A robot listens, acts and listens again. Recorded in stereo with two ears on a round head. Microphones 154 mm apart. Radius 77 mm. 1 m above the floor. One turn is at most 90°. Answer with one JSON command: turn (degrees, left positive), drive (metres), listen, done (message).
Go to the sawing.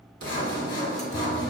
{"turn": 90}
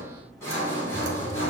{"turn": 15}
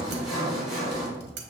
{"drive": 1.0}
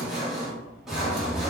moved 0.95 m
{"drive": 1.0}
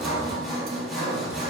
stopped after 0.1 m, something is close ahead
{"done": "I am next to the sawing."}